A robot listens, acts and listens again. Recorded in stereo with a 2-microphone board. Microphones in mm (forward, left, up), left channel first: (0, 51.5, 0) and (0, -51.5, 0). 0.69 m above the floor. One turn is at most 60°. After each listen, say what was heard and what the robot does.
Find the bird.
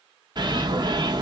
The bird: about 45° right or 135° right. Turn 45° right.
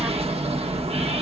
So it is at 90° right. Turn 60° right.
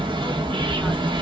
The bird is now 55° right. Turn 55° right.
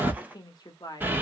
The bird is now 20° right. Turn 20° right.
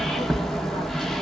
Facing the bird.